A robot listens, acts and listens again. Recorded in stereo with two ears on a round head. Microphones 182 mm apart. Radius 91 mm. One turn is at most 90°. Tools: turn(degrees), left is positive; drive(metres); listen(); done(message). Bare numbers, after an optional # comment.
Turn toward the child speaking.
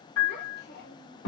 # The child speaking: about 55° left or 125° left.
turn(55)
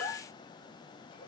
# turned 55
listen()
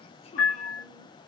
listen()
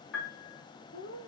# So it is at 60° left.
turn(60)
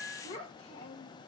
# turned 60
# The child speaking is now 35° left.
turn(35)
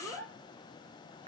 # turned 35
# The child speaking is now 10° right.
turn(-10)
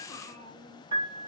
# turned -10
done("Found it: a child speaking, straight ahead.")